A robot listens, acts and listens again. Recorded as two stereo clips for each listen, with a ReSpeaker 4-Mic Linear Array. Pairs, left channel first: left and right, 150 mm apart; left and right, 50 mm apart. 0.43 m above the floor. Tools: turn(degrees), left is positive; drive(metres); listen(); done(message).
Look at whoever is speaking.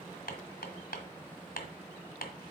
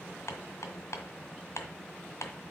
listen()
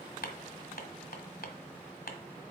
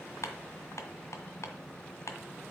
listen()
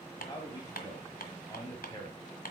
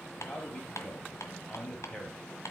turn(degrees=25)
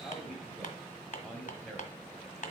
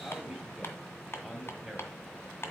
done("Facing the man speaking.")